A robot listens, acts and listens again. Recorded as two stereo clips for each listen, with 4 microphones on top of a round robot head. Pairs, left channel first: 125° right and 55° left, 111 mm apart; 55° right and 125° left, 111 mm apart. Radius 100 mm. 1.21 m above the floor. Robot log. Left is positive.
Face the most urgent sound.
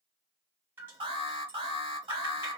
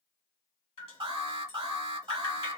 note: The alarm: 90° left.
cmd yaw +90
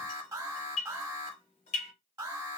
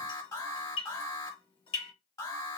end: Found it: an alarm, straight ahead, 1 to 2 m away.